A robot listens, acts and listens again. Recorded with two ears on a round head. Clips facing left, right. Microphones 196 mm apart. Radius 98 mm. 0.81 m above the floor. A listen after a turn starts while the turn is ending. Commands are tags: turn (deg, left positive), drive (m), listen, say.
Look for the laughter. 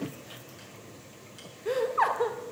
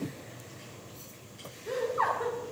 <turn deg="70"/>
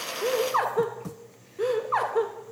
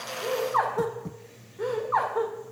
<turn deg="40"/>
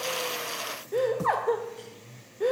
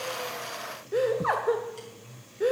<say>Facing the laughter, 1 to 2 m away.</say>